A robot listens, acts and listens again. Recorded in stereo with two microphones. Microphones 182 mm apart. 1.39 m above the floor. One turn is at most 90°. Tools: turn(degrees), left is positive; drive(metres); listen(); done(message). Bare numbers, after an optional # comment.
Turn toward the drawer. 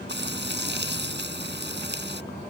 listen()
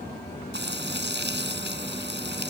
listen()
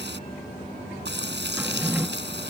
turn(-30)
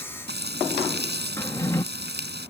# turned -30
# So it is at 20° left.
turn(20)
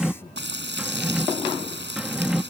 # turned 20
done("Found it: a drawer, straight ahead.")